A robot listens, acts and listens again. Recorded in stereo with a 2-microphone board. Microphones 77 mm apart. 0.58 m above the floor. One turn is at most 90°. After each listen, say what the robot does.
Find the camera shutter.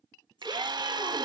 Keep listening.
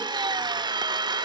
Keep listening.
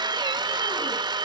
I can't make out a camera shutter, only a drill.